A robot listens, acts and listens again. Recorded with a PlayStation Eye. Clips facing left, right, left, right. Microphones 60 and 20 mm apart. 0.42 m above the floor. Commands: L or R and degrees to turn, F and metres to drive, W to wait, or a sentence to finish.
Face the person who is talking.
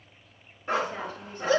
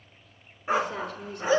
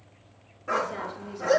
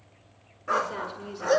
R65
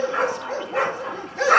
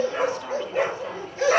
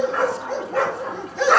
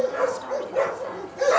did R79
W
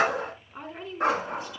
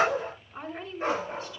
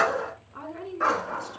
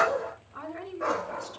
L15
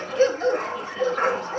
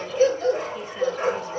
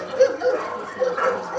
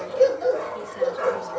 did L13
W
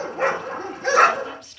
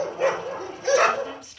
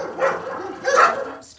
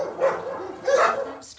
Found it: a woman speaking, straight ahead.